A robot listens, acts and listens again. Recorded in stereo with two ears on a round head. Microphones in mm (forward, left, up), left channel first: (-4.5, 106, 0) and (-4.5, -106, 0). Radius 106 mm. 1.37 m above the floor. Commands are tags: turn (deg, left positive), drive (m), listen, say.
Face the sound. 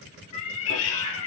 <turn deg="65"/>
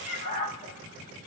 <turn deg="30"/>
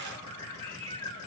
<turn deg="15"/>
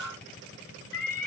<turn deg="10"/>
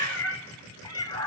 <turn deg="15"/>
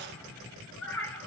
<say>Facing the cat meowing.</say>